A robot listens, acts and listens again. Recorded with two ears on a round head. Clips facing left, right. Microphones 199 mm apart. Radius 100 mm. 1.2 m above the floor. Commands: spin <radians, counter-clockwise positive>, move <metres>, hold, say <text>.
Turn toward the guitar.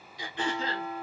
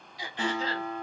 spin -0.96
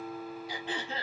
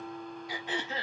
say Facing the guitar, 1 to 2 m away.